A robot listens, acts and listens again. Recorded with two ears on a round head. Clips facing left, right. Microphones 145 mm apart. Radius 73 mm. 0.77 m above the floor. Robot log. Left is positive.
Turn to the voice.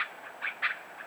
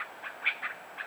cmd idle
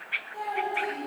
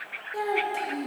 cmd yaw -90
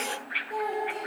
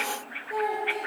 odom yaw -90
end: Found it: a child speaking, straight ahead, 2 to 4 m away.